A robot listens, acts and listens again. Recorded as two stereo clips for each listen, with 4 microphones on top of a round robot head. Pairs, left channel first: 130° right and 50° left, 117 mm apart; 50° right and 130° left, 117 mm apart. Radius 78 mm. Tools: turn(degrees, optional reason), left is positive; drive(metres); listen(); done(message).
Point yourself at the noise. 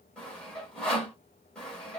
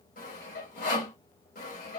turn(degrees=-50, reason="The sawing: 50° right.")
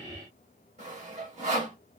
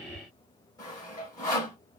turn(degrees=15, reason="The sawing is now 15° left.")
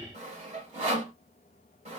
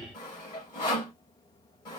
done("Found it: sawing, straight ahead, 2 to 4 m away.")